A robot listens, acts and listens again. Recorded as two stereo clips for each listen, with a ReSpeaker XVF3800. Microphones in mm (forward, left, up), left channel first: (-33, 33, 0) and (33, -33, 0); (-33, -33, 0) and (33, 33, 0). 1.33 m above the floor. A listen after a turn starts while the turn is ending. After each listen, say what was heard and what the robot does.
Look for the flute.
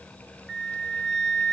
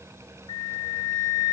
The flute: 145° right. Turn 145° right.
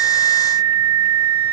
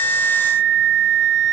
The flute is now 40° right. Turn 40° right.
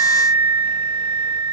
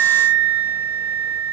The flute is now 25° right. Turn 25° right.
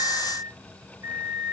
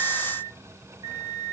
Facing the flute, 1 to 2 m away.